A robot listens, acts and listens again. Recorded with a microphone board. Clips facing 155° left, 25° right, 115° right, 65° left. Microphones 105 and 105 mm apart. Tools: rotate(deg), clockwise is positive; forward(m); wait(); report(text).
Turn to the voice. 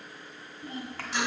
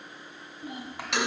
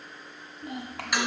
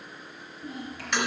rotate(100)
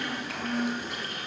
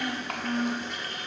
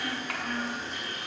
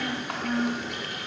report("Facing the child speaking.")